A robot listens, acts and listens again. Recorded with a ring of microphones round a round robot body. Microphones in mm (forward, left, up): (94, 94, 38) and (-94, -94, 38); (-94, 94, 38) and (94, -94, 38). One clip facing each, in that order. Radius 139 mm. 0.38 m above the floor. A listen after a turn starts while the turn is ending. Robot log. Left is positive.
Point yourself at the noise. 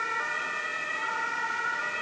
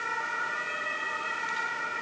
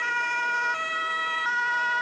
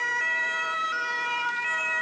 cmd idle
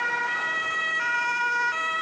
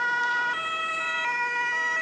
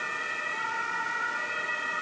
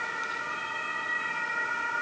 cmd idle
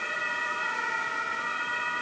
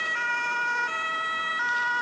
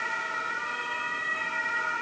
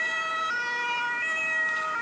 end: I can't make out anything to turn to.